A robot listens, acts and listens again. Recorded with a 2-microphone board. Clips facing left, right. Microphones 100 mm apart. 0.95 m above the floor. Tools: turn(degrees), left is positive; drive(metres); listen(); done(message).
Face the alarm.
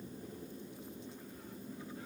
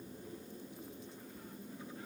listen()
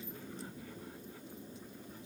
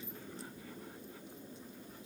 listen()
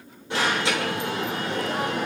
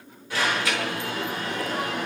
turn(degrees=25)
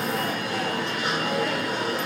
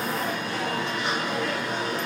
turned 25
done("Found it: an alarm, straight ahead, over 4 m away.")